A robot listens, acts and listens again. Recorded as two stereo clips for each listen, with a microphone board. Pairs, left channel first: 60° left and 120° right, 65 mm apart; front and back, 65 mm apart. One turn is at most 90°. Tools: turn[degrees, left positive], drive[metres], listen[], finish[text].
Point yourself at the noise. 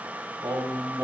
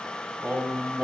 Thought: The singing: 110° right.
Action: turn[-90]
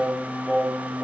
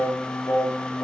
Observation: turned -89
Thought: The singing is now 20° right.
Action: turn[-20]
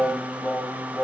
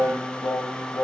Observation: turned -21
Action: finish[Facing the singing, 2 to 4 m away.]